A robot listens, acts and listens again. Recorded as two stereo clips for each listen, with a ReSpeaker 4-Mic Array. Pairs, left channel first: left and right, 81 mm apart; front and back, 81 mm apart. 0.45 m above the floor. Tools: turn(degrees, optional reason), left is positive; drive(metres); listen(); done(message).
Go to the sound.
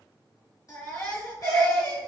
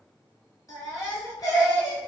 turn(degrees=40, reason="The baby crying: 40° left.")
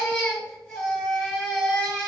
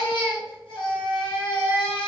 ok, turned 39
drive(metres=1.0)
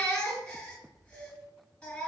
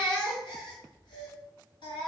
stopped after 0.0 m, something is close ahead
turn(degrees=10, reason="The baby crying is now 10° left.")
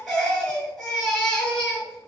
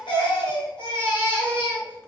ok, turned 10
done("Blocked. The baby crying is further on, straight ahead.")